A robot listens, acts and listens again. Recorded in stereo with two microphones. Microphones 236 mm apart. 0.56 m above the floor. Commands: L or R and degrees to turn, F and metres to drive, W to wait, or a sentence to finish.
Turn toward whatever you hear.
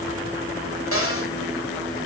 L65
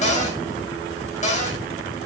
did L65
L30
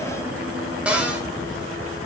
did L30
Facing the cupboard door.